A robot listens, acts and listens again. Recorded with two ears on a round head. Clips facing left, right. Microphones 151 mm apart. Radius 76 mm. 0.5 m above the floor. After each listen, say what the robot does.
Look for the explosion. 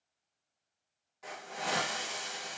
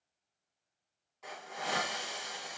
Keep listening.
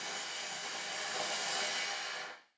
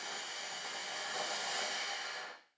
Keep listening.
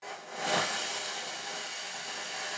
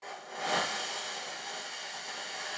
I can't make out an explosion, only a hiss.